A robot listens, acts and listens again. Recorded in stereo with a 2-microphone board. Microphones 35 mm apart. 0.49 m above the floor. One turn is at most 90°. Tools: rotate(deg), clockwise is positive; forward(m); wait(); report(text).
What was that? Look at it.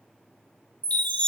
rotate(-40)
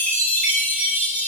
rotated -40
rotate(-90)
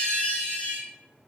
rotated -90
rotate(-45)
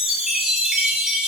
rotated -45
rotate(20)
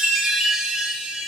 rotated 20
report("Found it: a chime, straight ahead, 1 to 2 m away.")